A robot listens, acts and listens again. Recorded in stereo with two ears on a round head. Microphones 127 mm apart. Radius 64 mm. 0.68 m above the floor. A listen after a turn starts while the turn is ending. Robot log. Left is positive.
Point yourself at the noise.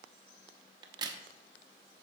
note: The crack: about 30° right or 150° right.
cmd yaw -30
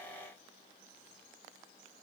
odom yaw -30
cmd idle
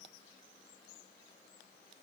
end: I heard a crack, but can't make it out now. It was about straight ahead or 120° right.